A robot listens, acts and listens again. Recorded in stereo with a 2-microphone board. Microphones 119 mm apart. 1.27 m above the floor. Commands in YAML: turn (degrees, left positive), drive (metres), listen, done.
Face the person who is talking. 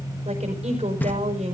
turn: -90
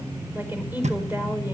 turn: -15
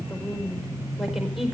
done: "Found it: a woman speaking, straight ahead."